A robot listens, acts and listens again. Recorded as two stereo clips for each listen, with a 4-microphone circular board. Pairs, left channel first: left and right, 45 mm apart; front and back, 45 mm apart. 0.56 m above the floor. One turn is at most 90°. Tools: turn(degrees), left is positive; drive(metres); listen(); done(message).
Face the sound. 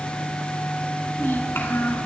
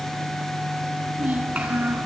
turn(degrees=90)
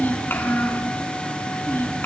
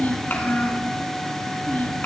turn(degrees=50)
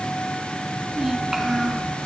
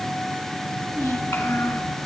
turn(degrees=-10)
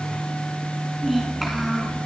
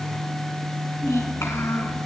done("Facing the child speaking.")